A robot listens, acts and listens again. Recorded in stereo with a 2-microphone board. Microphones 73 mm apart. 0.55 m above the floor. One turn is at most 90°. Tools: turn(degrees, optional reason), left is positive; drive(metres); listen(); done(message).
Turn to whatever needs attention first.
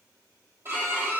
listen()
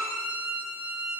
listen()
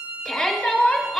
turn(degrees=30)
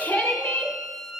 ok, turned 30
turn(degrees=90, reason="So it is at 145° left.")
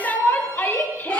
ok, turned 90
turn(degrees=45, reason="The shout is now 45° left.")
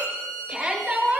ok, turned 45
turn(degrees=-10, reason="The shout is now 10° right.")
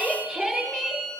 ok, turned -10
done("Found it: a shout, straight ahead.")